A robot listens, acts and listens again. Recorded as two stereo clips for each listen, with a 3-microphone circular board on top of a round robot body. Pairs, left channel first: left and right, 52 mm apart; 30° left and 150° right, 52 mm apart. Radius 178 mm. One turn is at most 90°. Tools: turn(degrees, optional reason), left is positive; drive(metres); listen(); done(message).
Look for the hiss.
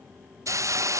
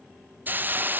turn(degrees=-90, reason="The hiss: 100° right.")
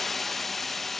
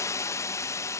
done("Found it: a hiss, straight ahead.")